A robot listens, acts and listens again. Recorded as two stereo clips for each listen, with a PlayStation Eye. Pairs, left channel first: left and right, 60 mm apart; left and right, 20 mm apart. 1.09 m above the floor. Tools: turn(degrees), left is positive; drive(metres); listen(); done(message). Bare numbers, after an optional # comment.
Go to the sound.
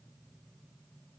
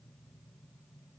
listen()
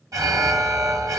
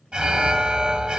# The alarm: about 70° right or 110° right.
turn(-70)
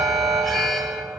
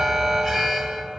drive(1.0)
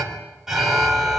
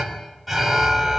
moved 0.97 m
drive(1.0)
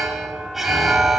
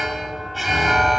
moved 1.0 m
drive(1.0)
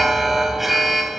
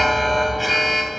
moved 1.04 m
drive(1.0)
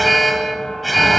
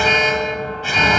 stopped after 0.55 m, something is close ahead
done("Arrived at the alarm, straight ahead.")